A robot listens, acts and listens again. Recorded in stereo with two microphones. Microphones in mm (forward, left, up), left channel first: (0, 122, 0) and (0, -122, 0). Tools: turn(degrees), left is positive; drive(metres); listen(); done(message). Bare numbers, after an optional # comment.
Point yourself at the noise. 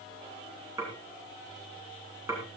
turn(-30)
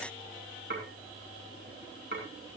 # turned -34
# So it is at 135° right.
turn(-135)
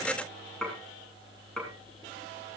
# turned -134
done("Found it: dishes clattering, straight ahead, over 4 m away.")